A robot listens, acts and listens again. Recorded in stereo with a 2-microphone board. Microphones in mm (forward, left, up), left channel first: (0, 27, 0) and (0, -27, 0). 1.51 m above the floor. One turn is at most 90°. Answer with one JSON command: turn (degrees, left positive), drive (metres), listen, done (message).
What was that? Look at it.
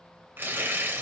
{"turn": -40}
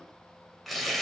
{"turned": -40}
{"done": "Facing the tearing paper, under 1 m away."}